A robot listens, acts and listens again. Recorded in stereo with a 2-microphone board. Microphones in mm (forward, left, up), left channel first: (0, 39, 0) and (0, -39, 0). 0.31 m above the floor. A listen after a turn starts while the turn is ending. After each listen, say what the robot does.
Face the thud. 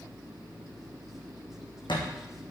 Turn 90° left.
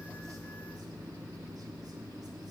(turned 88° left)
I heard a thud from this way, but can't make it out now.